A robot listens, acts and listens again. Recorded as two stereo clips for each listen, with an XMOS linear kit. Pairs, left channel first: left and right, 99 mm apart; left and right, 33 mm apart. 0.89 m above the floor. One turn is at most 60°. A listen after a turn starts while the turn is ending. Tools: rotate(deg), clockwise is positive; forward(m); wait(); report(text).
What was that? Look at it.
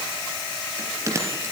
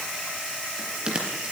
rotate(30)
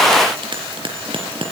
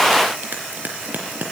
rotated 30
rotate(60)
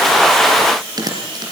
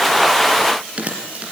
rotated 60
rotate(40)
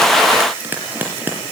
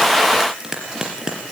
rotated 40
rotate(20)
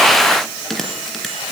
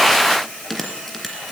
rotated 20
report("Facing the bell, over 4 m away.")